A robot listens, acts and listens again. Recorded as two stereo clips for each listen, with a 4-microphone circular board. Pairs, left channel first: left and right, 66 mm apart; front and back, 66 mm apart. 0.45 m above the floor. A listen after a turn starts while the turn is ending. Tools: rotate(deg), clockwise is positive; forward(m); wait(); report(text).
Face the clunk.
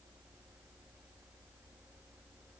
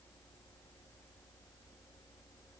wait()
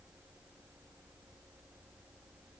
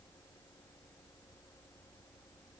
wait()
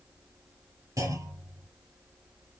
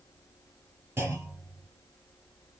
rotate(120)
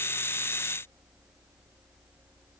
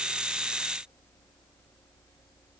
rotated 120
report("Facing where the clunk came from. I can't hear it now.")